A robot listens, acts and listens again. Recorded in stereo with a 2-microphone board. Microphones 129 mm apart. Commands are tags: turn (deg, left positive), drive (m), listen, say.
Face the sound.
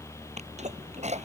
<turn deg="-60"/>
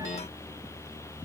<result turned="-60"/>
<listen/>
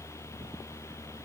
<say>I heard a sneeze, but can't make it out now. It was about straight ahead or 60° right.</say>